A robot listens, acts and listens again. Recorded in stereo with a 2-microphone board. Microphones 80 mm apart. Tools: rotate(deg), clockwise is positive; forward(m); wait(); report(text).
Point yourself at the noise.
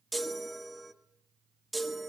rotate(-30)
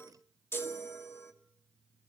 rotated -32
rotate(-150)
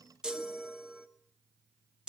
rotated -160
rotate(10)
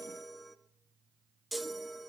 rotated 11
report("Found it: a chime, straight ahead, 1 to 2 m away.")